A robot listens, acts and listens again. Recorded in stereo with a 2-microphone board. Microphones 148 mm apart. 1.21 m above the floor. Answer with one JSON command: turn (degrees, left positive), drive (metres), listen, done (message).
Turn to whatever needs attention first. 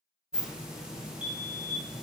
{"turn": -60}
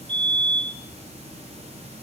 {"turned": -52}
{"turn": -40}
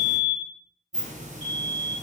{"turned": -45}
{"done": "Found it: a fire alarm, straight ahead, 1 to 2 m away."}